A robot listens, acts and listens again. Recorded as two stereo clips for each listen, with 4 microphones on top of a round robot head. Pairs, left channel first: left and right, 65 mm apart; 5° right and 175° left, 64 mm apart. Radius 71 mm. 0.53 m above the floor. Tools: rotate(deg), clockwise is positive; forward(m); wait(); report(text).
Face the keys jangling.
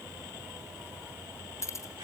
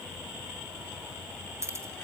rotate(-130)
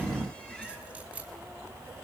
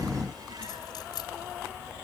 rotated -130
rotate(20)
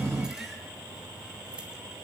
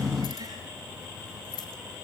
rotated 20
wait()
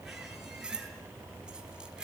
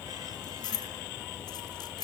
rotate(10)
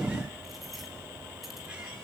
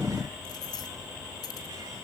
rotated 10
report("Facing the keys jangling, 2 to 4 m away.")